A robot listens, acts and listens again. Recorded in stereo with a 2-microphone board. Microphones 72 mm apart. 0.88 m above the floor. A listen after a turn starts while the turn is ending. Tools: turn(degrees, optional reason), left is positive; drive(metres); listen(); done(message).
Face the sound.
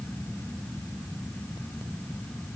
listen()
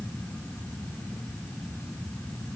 listen()
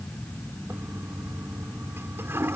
turn(degrees=-35, reason="The toilet flushing: about 35° right or 145° right.")
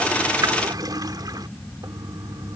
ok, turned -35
turn(degrees=-105, reason="So it is at 105° right.")
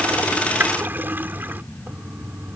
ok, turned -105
turn(degrees=-30, reason="The toilet flushing is now 30° right.")
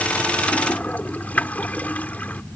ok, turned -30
turn(degrees=25, reason="The toilet flushing is now 25° left.")
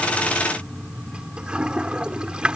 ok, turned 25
turn(degrees=-15, reason="The toilet flushing is now 15° right.")
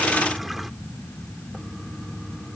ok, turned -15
done("Found it: a toilet flushing, straight ahead.")